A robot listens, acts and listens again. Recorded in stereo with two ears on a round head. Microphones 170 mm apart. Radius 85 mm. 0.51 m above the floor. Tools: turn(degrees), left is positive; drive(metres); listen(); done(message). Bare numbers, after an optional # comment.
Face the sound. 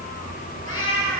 turn(90)
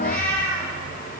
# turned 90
done("Found it: a cat meowing, straight ahead, over 4 m away.")